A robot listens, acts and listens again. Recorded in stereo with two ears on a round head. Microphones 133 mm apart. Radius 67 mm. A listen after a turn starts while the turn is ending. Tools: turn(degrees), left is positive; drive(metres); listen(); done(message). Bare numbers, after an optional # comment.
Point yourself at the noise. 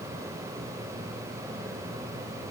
listen()
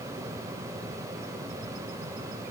listen()
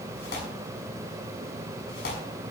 turn(90)
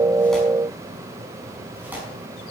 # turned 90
# So it is at 10° right.
turn(-10)
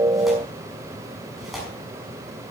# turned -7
done("Found it: tearing paper, straight ahead, over 4 m away.")